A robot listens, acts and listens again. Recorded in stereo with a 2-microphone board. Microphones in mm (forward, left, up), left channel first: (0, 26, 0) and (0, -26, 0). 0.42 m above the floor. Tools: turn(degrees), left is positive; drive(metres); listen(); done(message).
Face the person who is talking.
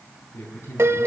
turn(degrees=55)
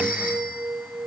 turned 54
listen()
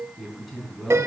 done("Found it: a man speaking, straight ahead.")